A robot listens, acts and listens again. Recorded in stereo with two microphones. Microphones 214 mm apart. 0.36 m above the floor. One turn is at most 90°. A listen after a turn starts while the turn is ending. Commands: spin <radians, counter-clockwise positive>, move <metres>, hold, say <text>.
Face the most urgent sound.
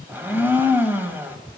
hold
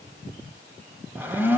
hold
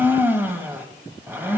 say I can't make out anything urgent to turn to.